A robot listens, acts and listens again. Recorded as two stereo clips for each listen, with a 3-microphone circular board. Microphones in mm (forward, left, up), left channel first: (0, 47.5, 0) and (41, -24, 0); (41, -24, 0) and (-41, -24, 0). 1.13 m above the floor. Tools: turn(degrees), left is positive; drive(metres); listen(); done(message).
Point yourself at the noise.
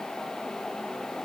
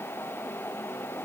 listen()
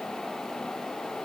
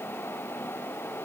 listen()
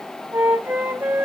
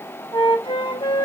done("Found it: a flute, straight ahead.")